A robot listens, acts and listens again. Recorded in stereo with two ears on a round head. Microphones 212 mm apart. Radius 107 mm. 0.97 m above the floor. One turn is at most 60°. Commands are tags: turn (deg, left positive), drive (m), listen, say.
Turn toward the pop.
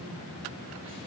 <listen/>
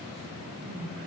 <listen/>
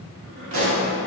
<turn deg="-55"/>
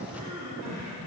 <listen/>
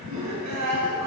<say>I heard a pop, but can't make it out now. It was about straight ahead or 70° right.</say>